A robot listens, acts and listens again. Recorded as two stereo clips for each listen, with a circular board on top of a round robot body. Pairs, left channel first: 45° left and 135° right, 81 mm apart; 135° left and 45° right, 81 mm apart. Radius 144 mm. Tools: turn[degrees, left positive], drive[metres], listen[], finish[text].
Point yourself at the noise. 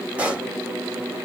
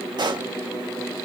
Thought: The pop: 60° right.
Action: turn[-60]
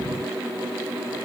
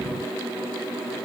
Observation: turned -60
Action: finish[I heard a pop from this way, but can't make it out now.]